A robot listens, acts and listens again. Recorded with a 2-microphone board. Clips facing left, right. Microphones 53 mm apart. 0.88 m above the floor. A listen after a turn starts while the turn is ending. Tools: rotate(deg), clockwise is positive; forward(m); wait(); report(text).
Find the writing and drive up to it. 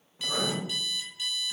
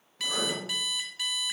rotate(-15)
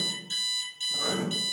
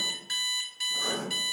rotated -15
rotate(-150)
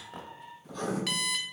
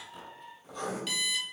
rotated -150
forward(1.0)
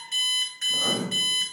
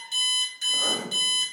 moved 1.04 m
rotate(10)
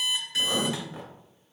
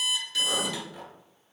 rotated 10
forward(1.0)
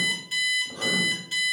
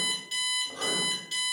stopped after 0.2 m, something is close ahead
report("Arrived at the writing, straight ahead.")